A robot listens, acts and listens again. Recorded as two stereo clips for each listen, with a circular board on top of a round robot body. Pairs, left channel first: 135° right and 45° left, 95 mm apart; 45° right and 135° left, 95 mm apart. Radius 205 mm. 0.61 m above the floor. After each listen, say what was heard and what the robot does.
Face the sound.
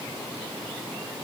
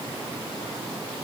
Keep listening.
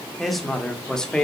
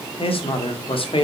The man speaking: 55° right. Turn 55° right.
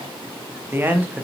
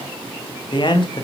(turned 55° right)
The man speaking is now 30° right. Turn 30° right.
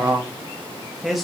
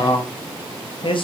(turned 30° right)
The man speaking is now 45° right. Turn 45° right.
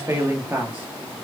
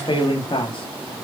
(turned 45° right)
The man speaking is now 25° right. Turn 25° right.
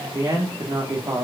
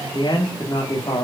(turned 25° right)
Facing the man speaking, 1 to 2 m away.